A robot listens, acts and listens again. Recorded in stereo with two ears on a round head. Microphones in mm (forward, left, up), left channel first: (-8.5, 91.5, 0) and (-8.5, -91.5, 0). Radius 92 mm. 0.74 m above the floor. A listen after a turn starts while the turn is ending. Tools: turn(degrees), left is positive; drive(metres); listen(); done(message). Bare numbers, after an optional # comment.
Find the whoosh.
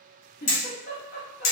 listen()
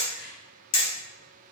listen()
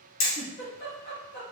done("I can't make out a whoosh to turn to.")